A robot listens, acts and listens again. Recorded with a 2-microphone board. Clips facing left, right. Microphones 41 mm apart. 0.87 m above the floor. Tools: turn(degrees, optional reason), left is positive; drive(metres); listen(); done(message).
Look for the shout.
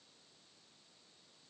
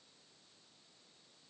listen()
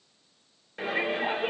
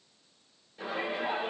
turn(degrees=90)
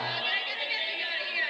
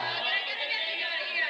done("Facing the shout, 2 to 4 m away.")